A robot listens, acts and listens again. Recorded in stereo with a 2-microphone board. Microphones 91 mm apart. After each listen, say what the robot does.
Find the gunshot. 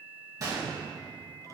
Turn 40° right.
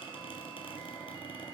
Keep listening.
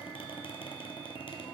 I heard a gunshot, but can't make it out now. It was about straight ahead or 100° right.